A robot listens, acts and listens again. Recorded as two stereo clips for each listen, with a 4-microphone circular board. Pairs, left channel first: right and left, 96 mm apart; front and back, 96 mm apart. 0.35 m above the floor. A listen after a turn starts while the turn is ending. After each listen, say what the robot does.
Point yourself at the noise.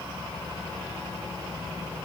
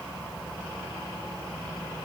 Keep listening.
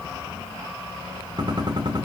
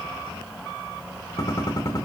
Turn 55° left.
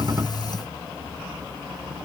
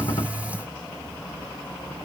Facing where the gunshot came from. I can't hear it now.